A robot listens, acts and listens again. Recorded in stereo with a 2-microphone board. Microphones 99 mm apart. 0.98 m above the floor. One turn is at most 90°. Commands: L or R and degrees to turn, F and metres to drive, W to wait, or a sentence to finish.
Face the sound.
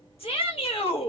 L65
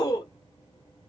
L40
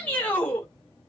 L20
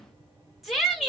Facing the shout, 1 to 2 m away.